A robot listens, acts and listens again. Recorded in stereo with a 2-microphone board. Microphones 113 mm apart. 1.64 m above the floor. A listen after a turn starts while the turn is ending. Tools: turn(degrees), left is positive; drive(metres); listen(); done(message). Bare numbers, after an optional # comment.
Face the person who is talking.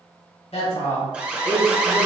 turn(90)
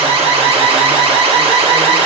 listen()
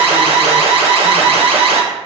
listen()
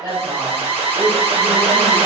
# The woman speaking is now 25° right.
turn(-25)
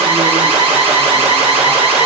listen()
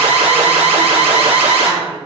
listen()
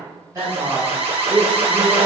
# The woman speaking is now 20° right.
turn(-20)
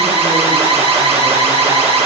listen()
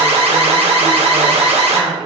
done("Facing the woman speaking, 2 to 4 m away.")